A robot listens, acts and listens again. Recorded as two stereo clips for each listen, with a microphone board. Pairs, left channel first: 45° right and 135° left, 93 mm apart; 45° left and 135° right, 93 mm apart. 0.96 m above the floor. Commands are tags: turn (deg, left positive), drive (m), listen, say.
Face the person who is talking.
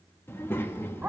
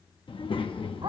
<turn deg="20"/>
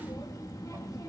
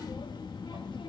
<turn deg="10"/>
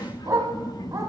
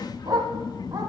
<say>Found it: a child speaking, straight ahead, under 1 m away.</say>